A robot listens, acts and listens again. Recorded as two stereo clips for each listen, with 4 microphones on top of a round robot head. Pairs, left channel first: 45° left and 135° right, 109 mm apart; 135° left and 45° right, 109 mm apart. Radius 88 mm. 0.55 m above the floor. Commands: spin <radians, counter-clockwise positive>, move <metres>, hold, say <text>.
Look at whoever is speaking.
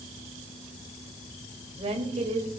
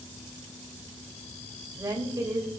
spin -1.83
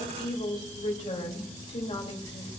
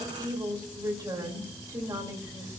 spin 0.26
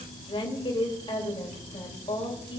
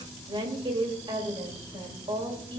say Facing the woman speaking, 2 to 4 m away.